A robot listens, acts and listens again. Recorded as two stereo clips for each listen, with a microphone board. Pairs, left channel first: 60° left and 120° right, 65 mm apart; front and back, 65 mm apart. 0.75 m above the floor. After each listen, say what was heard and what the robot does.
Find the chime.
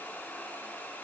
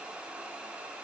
Keep listening.
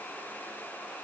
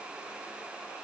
Keep listening.
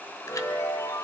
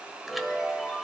The chime: 90° left. Turn 90° left.
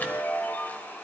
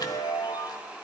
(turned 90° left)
Facing the chime.